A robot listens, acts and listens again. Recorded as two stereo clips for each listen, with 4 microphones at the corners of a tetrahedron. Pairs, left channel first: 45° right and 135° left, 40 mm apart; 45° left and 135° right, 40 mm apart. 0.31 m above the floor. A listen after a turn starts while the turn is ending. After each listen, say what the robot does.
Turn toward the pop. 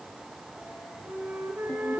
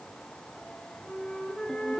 Keep listening.
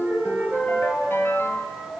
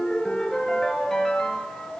Keep listening.
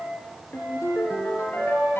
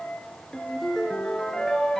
I can't make out a pop to turn to.